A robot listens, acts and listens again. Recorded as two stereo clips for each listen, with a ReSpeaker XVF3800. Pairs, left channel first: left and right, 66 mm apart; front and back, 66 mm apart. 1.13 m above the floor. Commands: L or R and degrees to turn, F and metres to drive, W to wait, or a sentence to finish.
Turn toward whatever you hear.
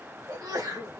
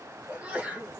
R105
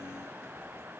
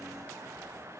Facing where the sneeze came from. I can't hear it now.